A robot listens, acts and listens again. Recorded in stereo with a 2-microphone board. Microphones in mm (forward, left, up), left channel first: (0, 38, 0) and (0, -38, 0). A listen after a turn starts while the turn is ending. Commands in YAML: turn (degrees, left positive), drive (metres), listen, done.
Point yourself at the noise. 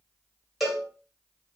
turn: -30
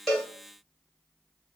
listen: true
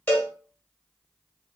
turn: 25
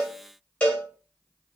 turn: 20
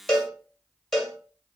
done: "Facing the cowbell, under 1 m away."